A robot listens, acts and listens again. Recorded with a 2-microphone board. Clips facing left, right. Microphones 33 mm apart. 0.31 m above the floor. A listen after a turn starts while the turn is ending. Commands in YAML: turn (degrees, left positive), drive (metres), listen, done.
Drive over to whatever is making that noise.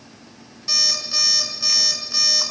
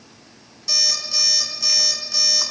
turn: 20
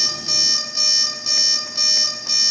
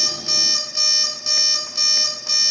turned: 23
drive: 1.0
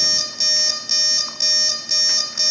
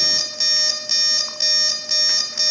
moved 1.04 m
turn: -10
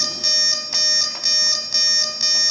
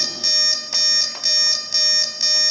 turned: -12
drive: 1.0
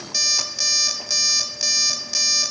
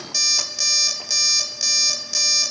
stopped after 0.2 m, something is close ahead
done: "I am next to the alarm clock."